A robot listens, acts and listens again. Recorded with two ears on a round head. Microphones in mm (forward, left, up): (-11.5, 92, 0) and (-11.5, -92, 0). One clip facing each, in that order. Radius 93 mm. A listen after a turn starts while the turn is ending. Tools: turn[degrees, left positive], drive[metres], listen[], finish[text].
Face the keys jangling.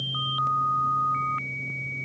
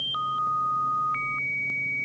Action: listen[]
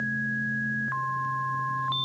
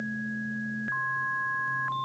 Action: listen[]
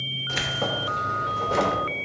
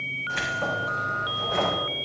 Thought: The keys jangling: about 55° left or 125° left.
Action: turn[55]
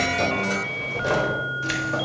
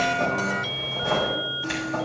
Thought: So it is at 60° left.
Action: turn[60]
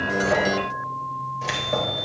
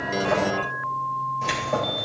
Action: finish[Found it: keys jangling, straight ahead.]